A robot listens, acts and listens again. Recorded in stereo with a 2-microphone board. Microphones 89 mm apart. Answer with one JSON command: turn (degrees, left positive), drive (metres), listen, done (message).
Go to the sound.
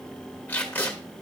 {"turn": 25}
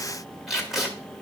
{"drive": 1.0}
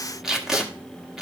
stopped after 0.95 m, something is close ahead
{"done": "Arrived at the tape being pulled, straight ahead."}